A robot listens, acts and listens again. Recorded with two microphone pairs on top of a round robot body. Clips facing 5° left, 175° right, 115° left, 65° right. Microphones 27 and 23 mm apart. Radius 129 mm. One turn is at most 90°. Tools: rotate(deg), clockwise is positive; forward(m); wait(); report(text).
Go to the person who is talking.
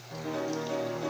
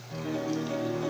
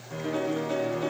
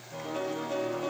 wait()
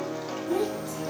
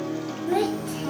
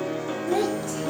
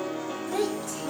rotate(90)
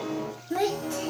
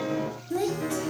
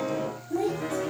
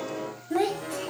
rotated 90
rotate(60)
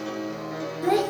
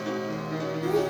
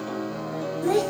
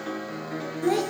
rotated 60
rotate(-15)
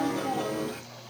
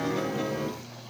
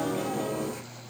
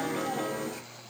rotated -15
wait()
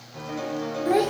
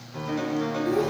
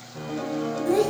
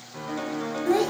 forward(1.0)
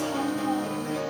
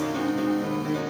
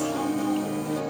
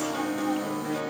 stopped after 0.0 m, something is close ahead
wait()
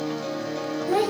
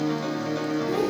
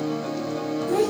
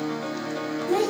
report("Blocked. The child speaking is further on, straight ahead.")